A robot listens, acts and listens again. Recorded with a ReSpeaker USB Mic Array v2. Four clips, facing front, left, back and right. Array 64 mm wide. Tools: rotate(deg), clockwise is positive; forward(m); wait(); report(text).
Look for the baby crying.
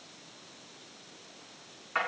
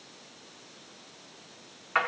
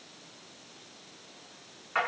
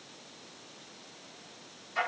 wait()
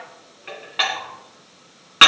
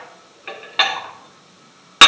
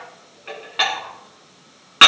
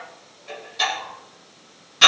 wait()
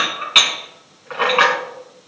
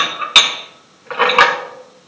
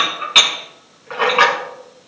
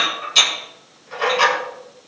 report("I can't make out a baby crying, only dishes clattering.")